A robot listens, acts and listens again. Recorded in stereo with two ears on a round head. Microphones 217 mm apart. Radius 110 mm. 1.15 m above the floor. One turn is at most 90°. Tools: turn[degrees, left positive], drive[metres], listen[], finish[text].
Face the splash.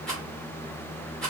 Action: listen[]
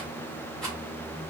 Action: listen[]
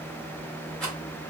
Action: finish[I can't make out a splash, only a rattle.]